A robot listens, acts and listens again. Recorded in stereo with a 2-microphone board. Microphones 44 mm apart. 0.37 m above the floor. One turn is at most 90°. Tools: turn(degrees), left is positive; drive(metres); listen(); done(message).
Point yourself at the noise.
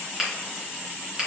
turn(degrees=-30)
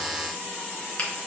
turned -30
listen()
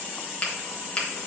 turn(degrees=20)
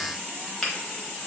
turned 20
done("Found it: a finger snap, straight ahead.")